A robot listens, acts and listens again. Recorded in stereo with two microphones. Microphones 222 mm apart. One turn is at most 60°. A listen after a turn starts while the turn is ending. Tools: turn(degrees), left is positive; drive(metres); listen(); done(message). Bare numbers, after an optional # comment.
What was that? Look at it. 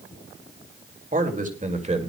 # The man speaking: about 30° right or 150° right.
turn(-30)
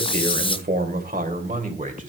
# The man speaking: about 35° right or 145° right.
turn(-35)
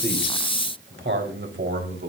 # So it is at 125° right.
turn(-60)
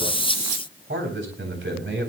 # The man speaking is now 60° right.
turn(-60)
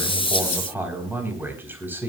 # The man speaking is now 10° right.
turn(-10)
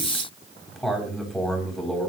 done("Found it: a man speaking, straight ahead.")